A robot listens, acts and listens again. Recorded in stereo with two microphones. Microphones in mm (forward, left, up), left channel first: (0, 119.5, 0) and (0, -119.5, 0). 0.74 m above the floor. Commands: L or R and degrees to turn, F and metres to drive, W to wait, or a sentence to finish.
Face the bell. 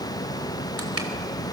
W
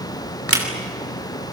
W
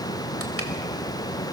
I can't make out a bell, only crushing.